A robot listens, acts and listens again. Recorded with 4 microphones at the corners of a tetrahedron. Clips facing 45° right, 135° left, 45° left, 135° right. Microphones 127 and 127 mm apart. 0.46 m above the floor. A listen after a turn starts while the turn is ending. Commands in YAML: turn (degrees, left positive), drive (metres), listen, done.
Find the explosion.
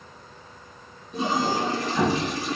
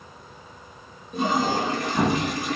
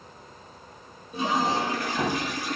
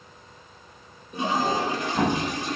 turn: -175
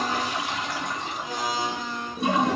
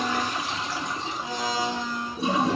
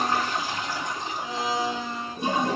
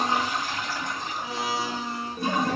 done: "I heard an explosion from this way, but can't make it out now."